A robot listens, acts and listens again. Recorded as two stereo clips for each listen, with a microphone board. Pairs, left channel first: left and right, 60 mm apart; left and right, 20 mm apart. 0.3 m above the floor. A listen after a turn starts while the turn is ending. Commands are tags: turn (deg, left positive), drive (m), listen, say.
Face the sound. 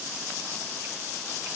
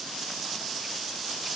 <listen/>
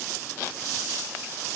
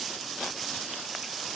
<listen/>
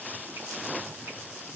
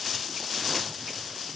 <say>I can't make out anything.</say>